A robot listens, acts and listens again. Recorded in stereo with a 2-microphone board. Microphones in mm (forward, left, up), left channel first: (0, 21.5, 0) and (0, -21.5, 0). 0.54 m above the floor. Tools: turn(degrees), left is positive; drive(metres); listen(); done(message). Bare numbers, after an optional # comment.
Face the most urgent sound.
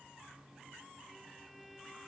listen()
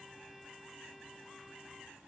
listen()
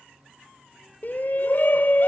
# The shout: about 50° left or 130° left.
turn(50)
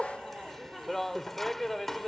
# So it is at 10° left.
turn(10)
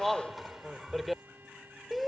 done("Facing the shout.")